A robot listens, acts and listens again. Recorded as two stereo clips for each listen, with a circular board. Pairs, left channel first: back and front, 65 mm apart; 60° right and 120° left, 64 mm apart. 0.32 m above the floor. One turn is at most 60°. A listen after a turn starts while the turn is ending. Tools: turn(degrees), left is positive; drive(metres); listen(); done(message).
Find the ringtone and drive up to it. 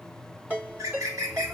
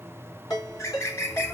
turn(degrees=-60)
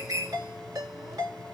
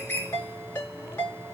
turn(degrees=-15)
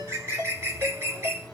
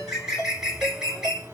drive(metres=1.0)
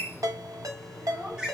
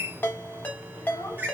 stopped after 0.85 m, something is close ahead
done("Arrived at the ringtone, straight ahead.")